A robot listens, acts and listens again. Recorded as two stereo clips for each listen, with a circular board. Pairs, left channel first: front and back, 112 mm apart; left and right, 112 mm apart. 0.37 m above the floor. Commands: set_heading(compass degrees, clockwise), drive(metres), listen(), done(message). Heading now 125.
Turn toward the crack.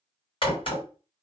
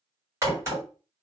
set_heading(155)
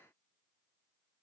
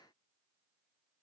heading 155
done("I heard a crack from this way, but can't make it out now.")